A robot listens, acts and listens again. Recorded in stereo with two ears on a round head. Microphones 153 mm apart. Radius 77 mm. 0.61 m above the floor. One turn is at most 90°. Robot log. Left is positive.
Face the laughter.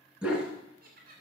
note: The laughter: about 55° right or 125° right.
cmd yaw -55
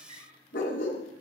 cmd idle
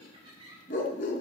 note: So it is at 30° right.
cmd yaw -30
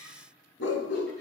cmd idle
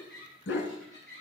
end: Found it: laughter, straight ahead, over 4 m away.